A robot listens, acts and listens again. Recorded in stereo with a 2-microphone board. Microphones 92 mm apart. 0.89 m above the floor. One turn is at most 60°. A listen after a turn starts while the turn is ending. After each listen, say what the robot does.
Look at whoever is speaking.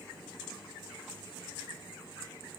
Keep listening.
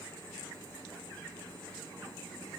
Keep listening.
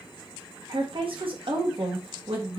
Turn 60° right.
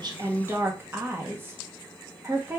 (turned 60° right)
Turn 30° right.
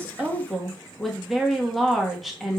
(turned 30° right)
Found it: a woman speaking, straight ahead.